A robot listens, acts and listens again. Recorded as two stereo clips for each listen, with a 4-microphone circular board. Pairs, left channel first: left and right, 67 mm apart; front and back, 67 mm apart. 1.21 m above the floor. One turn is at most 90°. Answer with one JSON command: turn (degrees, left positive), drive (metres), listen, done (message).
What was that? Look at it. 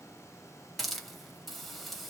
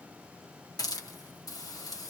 {"done": "Found it: a hiss, straight ahead."}